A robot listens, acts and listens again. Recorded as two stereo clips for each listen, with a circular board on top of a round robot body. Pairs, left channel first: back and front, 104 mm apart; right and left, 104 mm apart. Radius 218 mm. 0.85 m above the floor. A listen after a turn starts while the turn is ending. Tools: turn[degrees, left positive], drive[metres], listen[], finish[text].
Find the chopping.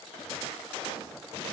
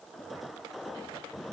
Action: listen[]
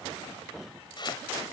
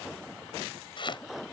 Thought: The chopping: 135° right.
Action: turn[-135]
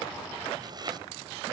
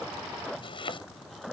Thought: The chopping is now 50° right.
Action: turn[-50]
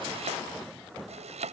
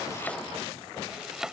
Action: finish[Found it: chopping, straight ahead.]